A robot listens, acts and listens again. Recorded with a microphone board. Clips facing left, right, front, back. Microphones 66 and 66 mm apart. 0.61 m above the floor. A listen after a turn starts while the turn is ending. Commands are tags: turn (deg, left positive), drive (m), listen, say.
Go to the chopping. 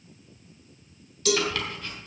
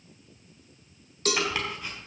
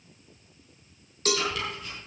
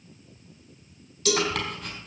<turn deg="-160"/>
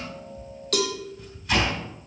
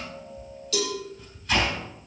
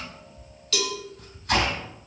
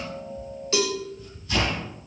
<drive m="1.0"/>
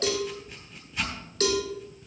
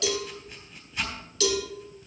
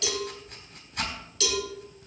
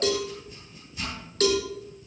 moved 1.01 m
<drive m="1.0"/>
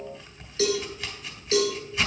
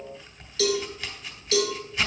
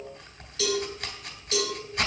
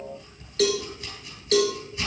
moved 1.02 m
<drive m="1.0"/>
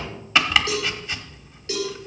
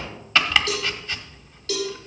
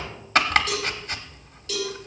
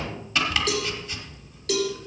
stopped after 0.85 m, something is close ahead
<turn deg="10"/>
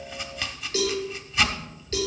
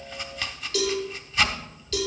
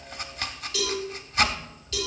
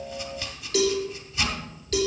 <say>Arrived at the chopping, straight ahead.</say>